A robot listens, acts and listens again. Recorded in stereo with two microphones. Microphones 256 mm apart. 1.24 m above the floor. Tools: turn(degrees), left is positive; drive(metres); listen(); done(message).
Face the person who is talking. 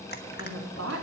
turn(degrees=-75)
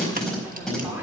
listen()
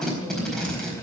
listen()
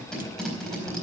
done("I heard a woman speaking, but can't make it out now. It was about straight ahead or 30° right.")